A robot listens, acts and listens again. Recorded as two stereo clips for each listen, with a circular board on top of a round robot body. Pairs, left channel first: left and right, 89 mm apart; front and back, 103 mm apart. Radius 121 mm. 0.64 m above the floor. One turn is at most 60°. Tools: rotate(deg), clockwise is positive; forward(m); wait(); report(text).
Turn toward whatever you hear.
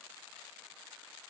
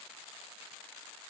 wait()
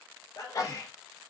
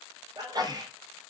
rotate(-60)
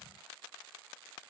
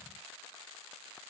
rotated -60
rotate(-60)
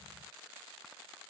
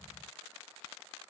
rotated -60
rotate(-15)
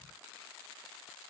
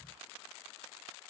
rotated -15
report("Facing where the sneeze came from. I can't hear it now.")